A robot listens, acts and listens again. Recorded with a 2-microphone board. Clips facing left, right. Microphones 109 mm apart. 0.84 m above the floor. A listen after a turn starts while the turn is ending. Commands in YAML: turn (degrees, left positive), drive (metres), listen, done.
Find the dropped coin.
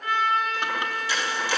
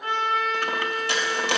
turn: -65
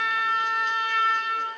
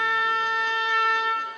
listen: true
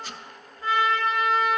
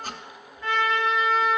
done: "I heard a dropped coin, but can't make it out now. It was about straight ahead or 50° right."